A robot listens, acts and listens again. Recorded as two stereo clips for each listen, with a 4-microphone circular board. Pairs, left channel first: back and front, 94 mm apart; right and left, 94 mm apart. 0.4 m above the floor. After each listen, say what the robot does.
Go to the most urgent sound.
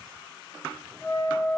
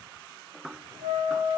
Keep listening.
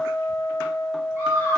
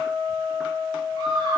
Turn 50° left.
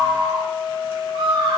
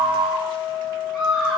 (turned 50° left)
Drive 1.0 m forward.
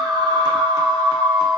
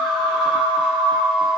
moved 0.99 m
Turn 10° left.
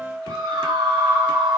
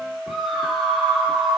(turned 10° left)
Drive 1.0 m forward.
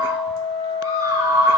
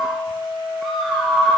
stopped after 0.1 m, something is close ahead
Arrived at the scream, straight ahead.